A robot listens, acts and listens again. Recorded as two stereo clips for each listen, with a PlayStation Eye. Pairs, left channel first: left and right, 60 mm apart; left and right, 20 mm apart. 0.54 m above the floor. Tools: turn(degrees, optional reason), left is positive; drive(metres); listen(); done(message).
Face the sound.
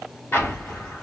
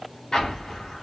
turn(degrees=40, reason="The explosion: about 40° left or 140° left.")
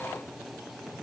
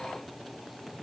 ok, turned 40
listen()
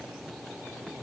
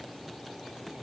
done("I heard an explosion, but can't make it out now. It was about straight ahead or 100° left.")